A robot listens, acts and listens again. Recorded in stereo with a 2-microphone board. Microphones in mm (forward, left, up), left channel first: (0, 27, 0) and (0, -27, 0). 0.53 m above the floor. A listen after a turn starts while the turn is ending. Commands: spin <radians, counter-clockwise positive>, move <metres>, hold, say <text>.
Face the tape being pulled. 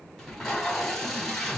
spin 0.52
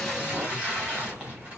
spin -0.52
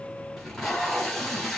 say Facing the tape being pulled, 2 to 4 m away.